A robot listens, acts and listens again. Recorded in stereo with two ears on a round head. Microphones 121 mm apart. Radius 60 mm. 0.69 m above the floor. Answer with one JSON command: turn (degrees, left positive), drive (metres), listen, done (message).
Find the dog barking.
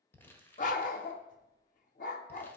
{"turn": 65}
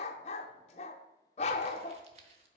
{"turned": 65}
{"turn": 50}
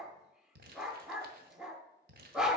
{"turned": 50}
{"done": "Facing the dog barking."}